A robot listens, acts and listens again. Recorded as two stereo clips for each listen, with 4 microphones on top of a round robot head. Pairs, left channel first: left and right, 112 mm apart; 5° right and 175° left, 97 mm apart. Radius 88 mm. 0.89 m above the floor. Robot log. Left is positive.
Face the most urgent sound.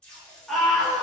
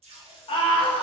end: Facing the scream, 1 to 2 m away.